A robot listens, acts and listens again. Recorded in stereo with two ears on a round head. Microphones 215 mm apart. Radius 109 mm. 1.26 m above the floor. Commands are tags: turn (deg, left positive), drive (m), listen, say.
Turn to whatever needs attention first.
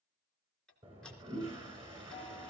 <listen/>
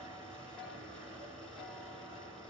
<listen/>
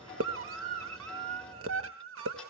<turn deg="-60"/>
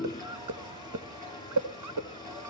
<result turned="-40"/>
<turn deg="-75"/>
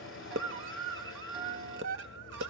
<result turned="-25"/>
<turn deg="-50"/>
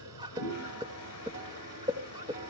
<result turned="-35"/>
<turn deg="-15"/>
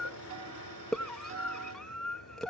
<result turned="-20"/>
<say>Facing the scream, 1 to 2 m away.</say>